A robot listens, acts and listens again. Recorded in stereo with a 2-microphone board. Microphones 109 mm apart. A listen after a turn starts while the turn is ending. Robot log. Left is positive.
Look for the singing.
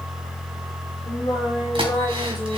note: The singing: about 45° left or 135° left.
cmd yaw +45
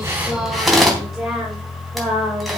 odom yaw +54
end: Found it: singing, straight ahead.